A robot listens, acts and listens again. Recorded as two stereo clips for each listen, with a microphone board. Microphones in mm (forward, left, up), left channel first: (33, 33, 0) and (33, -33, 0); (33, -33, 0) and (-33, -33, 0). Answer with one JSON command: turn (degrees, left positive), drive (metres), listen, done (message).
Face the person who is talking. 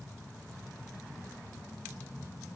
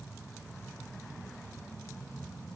{"listen": true}
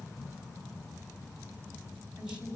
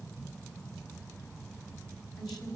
{"turn": -15}
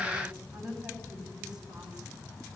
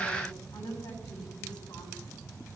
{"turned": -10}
{"turn": -10}
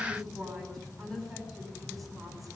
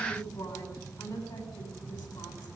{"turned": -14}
{"done": "Found it: a woman speaking, straight ahead, over 4 m away."}